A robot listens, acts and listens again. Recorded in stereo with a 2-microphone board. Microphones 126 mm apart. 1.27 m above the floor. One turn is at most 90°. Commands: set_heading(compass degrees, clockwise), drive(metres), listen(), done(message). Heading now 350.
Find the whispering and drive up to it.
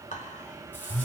set_heading(280)
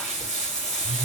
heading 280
listen()
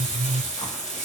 listen()
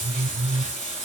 done("I heard whispering, but can't make it out now. It was about straight ahead or 40° left. I did not reach it.")